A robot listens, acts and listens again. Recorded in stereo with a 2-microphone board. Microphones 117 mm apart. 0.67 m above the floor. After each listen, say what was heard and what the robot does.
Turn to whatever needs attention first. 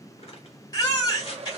The baby crying: about 35° left or 145° left. Turn 35° left.
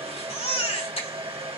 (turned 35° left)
So it is at 110° left. Turn 110° left.
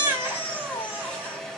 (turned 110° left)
The baby crying is now 40° left. Turn 40° left.
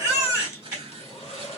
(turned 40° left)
The baby crying is now 25° right. Turn 25° right.
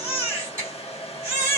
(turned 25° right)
The baby crying is now 25° right. Turn 25° right.
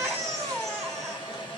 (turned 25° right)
Found it: a baby crying, straight ahead, 2 to 4 m away.